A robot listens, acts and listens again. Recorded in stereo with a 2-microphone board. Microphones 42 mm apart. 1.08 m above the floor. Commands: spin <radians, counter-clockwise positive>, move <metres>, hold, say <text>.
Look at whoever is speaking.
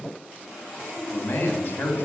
spin 0.79
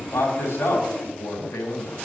spin 1.57
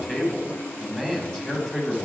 spin 0.26
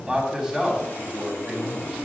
say Facing the man speaking, 2 to 4 m away.